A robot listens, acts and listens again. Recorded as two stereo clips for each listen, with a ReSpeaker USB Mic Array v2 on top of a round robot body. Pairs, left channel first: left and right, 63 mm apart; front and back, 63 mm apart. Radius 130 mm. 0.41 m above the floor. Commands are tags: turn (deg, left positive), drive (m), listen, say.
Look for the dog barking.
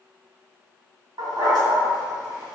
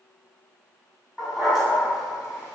<turn deg="-95"/>
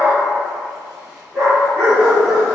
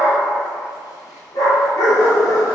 <turn deg="-15"/>
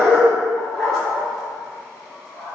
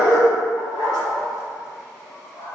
<say>Found it: a dog barking, straight ahead, over 4 m away.</say>